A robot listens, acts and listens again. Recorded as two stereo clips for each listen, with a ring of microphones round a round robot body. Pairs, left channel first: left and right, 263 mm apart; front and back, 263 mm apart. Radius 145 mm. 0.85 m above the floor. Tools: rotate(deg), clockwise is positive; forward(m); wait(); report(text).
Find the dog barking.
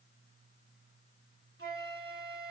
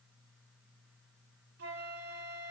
wait()
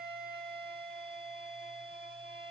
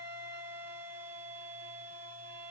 wait()
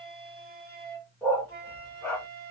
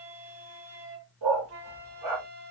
rotate(-175)
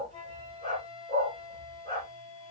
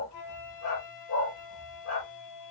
rotate(30)
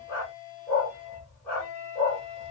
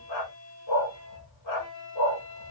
report("Facing the dog barking, over 4 m away.")